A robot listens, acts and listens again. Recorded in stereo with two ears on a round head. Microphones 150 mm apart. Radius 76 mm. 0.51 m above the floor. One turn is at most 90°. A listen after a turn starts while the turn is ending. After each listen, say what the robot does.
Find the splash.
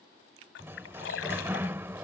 Turn 90° left.
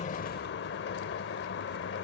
I heard a splash from this way, but can't make it out now.